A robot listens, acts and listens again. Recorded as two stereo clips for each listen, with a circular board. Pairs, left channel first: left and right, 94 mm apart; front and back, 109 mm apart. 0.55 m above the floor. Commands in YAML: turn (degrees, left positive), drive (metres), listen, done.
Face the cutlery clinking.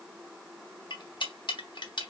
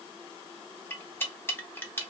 turn: 65
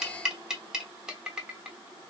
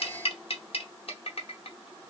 turn: -10
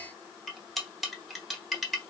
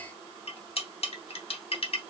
done: "Facing the cutlery clinking."